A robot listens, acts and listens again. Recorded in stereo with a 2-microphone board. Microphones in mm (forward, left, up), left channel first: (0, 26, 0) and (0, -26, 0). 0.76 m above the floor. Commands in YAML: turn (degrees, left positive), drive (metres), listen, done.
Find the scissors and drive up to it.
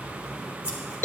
turn: -30
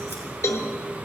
listen: true
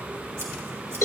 listen: true
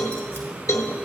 done: "I heard scissors, but can't make it out now. It was about straight ahead or 120° right. I did not reach it."